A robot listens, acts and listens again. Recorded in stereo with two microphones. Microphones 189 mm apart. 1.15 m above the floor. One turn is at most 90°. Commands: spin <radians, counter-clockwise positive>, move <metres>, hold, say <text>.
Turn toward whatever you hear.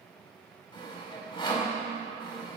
spin 0.44
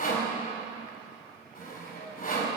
spin 1.57
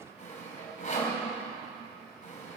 spin 0.79
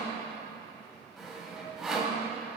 say Facing the sawing.